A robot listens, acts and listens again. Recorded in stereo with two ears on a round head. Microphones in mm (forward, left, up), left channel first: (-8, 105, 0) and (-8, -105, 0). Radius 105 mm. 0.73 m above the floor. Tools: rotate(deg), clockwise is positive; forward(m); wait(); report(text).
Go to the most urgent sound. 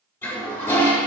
wait()
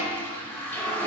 wait()
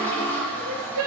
rotate(65)
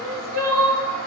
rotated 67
rotate(45)
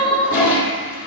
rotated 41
forward(1.0)
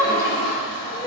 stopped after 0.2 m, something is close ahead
rotate(10)
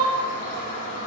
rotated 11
report("Blocked. The crying is further on, straight ahead.")